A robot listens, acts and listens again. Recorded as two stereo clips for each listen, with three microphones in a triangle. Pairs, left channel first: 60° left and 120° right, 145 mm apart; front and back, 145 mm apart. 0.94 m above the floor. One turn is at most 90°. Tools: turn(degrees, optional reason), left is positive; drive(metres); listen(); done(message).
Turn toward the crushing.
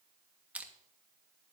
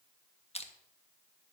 turn(degrees=-40, reason="The crushing: 40° right.")
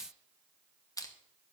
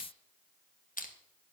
done("Found it: crushing, straight ahead, 1 to 2 m away.")